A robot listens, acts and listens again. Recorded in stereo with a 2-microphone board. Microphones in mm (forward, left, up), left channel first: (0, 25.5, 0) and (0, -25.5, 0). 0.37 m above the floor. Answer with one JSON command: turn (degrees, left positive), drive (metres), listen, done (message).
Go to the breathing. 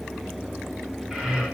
{"turn": -30}
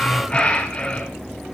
{"turn": 20}
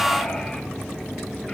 {"listen": true}
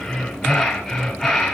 {"drive": 1.0}
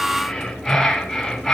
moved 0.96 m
{"drive": 1.0}
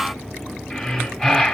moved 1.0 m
{"drive": 1.0}
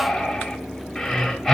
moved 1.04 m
{"turn": 10}
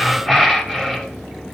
{"drive": 1.0}
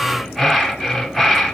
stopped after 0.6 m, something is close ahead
{"done": "Arrived at the breathing, straight ahead."}